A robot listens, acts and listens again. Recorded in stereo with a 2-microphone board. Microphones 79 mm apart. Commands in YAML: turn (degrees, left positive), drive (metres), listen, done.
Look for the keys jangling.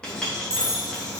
turn: -40
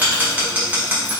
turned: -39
listen: true
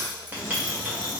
listen: true
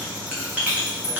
turn: 50
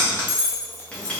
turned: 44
turn: 30
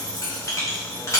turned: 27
listen: true
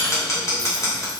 listen: true
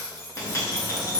done: "Found it: keys jangling, straight ahead, 1 to 2 m away."